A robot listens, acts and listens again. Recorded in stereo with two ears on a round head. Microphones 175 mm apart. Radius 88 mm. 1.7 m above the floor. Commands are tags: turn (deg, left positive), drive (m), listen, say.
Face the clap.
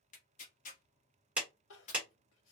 <turn deg="-30"/>
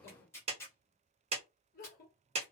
<turn deg="-145"/>
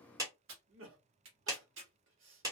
<turn deg="-20"/>
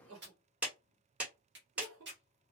<turn deg="-10"/>
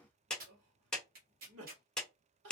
<say>Found it: a clap, straight ahead.</say>